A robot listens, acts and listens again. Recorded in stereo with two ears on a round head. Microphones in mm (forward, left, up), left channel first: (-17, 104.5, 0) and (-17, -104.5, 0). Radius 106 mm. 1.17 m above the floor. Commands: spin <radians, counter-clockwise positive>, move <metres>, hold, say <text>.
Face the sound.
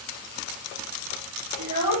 spin -0.79
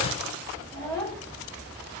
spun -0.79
say Found it: a child speaking, straight ahead.